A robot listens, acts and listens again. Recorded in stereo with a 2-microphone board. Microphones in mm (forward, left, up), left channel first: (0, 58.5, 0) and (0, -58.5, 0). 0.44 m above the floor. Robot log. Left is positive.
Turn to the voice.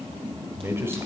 note: The man speaking: about 20° right or 160° right.
cmd yaw -20
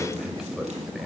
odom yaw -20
end: Facing the man speaking, 2 to 4 m away.